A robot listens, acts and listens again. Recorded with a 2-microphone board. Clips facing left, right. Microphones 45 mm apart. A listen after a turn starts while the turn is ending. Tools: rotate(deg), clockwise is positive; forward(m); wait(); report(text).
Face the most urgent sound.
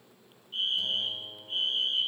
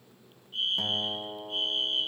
rotate(-35)
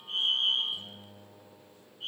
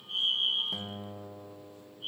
rotate(-105)
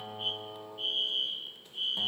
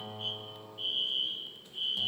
report("Facing the fire alarm.")